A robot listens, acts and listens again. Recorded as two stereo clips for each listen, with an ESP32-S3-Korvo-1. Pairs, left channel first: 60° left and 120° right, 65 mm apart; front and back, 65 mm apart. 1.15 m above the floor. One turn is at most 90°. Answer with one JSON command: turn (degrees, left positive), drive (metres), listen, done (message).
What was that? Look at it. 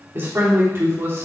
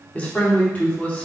{"turn": -70}
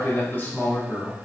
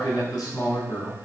{"done": "Facing the man speaking, 2 to 4 m away."}